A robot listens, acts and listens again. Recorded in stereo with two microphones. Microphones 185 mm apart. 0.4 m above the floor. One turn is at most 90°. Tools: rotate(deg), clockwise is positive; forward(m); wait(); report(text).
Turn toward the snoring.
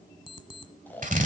rotate(-30)
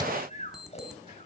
rotate(-90)
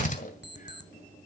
rotate(-55)
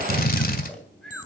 report("Found it: snoring, straight ahead, 2 to 4 m away.")